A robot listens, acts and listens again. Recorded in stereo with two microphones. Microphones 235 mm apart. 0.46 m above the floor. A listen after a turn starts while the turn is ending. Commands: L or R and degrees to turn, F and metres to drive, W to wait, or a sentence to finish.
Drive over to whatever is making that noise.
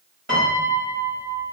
R50
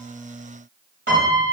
R65
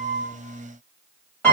L10
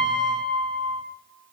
F1.0
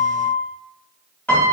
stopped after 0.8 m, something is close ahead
L10
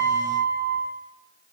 Arrived at the piano, straight ahead.